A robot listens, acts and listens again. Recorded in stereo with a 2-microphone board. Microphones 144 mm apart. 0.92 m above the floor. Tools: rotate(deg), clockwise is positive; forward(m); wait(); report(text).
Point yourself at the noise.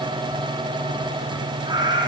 rotate(30)
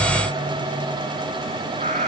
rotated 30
rotate(120)
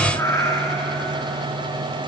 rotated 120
rotate(-20)
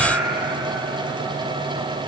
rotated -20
report("Facing the cat meowing, 2 to 4 m away.")